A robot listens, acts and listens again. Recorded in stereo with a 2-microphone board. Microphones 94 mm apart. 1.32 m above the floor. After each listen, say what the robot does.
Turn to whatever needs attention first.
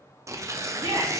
Turn 65° right.
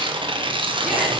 Keep listening.
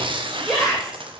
Facing the shout, 2 to 4 m away.